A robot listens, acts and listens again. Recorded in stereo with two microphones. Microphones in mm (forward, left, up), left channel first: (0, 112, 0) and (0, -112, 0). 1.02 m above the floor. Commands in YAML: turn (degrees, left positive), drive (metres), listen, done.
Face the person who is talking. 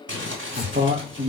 turn: -35
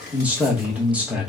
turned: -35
done: "Facing the man speaking, under 1 m away."